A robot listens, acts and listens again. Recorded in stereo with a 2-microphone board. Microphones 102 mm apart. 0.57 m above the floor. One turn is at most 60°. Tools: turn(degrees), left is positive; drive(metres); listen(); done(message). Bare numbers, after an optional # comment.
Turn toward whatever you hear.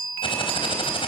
# The typing on a keyboard: about 60° left or 120° left.
turn(60)
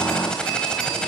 # So it is at 10° left.
turn(10)
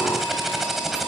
done("Found it: typing on a keyboard, straight ahead.")